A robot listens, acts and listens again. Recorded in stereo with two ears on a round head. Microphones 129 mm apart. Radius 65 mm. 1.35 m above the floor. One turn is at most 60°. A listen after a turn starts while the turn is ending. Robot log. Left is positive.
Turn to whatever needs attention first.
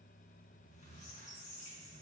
cmd idle
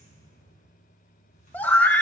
cmd yaw +30
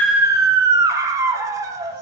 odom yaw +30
note: So it is at 20° right.
cmd yaw -20
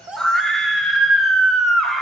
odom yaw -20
end: Facing the scream.